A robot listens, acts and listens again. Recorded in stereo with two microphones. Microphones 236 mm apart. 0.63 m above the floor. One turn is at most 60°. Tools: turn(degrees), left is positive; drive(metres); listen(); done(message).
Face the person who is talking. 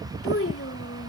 turn(degrees=60)
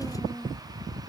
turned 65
turn(degrees=10)
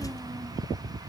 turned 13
listen()
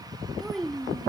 done("Found it: a child speaking, straight ahead.")